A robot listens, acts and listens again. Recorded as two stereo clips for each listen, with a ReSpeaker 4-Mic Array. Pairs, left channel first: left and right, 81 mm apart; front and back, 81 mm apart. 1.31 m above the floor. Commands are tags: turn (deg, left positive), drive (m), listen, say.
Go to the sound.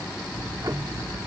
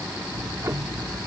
<turn deg="-130"/>
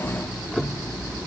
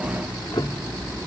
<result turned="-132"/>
<drive m="1.0"/>
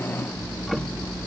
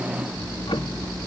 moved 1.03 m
<drive m="1.0"/>
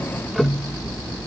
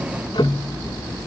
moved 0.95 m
<drive m="1.0"/>
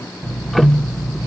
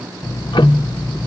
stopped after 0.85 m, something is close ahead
<say>Arrived at the ticking, straight ahead.</say>